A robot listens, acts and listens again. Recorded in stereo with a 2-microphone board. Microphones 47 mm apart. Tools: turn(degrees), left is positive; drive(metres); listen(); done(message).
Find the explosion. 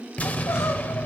turn(degrees=30)
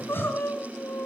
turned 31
listen()
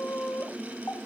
done("I heard an explosion, but can't make it out now. It was about straight ahead or 120° left.")